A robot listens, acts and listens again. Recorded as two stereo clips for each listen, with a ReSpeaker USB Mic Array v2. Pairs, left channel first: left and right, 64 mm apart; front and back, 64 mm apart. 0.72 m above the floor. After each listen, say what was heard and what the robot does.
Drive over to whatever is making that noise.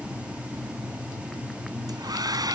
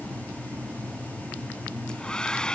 The hair dryer: 75° right. Turn 75° right.
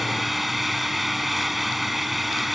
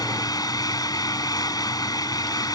Drive 1.0 m forward.
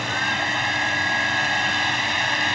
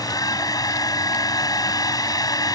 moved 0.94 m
Drive 1.0 m forward.
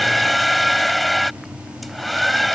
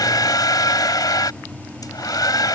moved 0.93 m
Drive 1.0 m forward.
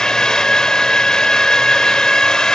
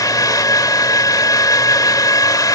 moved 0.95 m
The hair dryer is now 10° left. Turn 10° left.
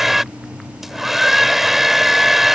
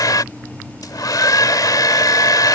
Drive 1.0 m forward.
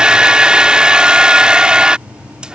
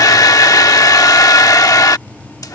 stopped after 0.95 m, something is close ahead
The hair dryer is now 15° right. Turn 15° right.
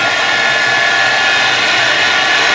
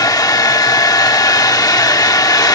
I am next to the hair dryer.